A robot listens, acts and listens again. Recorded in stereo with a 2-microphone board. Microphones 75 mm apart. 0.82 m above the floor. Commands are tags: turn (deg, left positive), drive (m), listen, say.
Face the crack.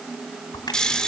<turn deg="70"/>
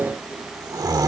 <listen/>
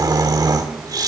<say>I heard a crack, but can't make it out now. It was about straight ahead or 40° left.</say>